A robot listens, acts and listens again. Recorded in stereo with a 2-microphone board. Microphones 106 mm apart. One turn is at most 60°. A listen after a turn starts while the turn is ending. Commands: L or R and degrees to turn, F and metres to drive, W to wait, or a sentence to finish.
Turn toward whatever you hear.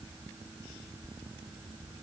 W
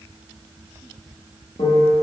L60
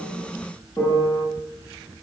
L30
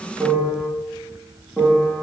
Found it: a piano, straight ahead, under 1 m away.